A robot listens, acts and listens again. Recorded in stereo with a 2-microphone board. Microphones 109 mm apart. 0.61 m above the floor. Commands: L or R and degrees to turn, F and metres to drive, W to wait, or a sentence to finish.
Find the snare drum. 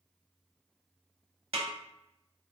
R65
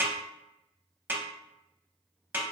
R20
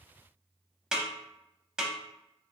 Facing the snare drum.